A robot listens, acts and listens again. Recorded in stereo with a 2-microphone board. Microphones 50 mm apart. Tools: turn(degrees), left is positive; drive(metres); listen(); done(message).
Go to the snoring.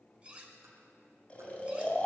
turn(degrees=25)
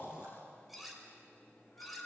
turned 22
turn(degrees=135)
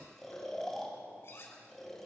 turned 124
turn(degrees=10)
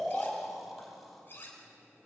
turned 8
drive(metres=1.0)
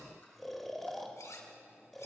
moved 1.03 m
drive(metres=1.0)
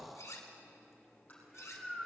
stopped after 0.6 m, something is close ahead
done("I am next to the snoring.")